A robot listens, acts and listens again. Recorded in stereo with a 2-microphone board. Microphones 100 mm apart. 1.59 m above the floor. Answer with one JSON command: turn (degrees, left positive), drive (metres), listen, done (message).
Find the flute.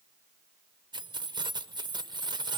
{"listen": true}
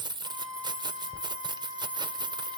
{"turn": 30}
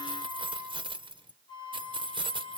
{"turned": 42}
{"turn": 125}
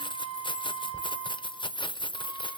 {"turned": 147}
{"turn": -20}
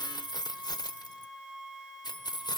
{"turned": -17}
{"done": "Found it: a flute, straight ahead."}